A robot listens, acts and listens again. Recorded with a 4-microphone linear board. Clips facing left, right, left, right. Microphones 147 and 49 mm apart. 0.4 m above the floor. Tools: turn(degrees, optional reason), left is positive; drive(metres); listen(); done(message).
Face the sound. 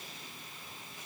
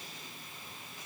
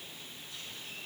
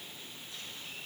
listen()
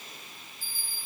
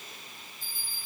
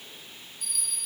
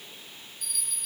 turn(degrees=30)
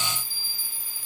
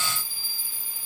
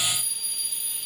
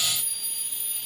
turn(degrees=-25, reason="So it is at 25° right.")
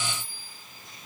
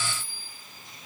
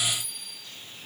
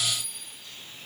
done("Found it: a bell, straight ahead.")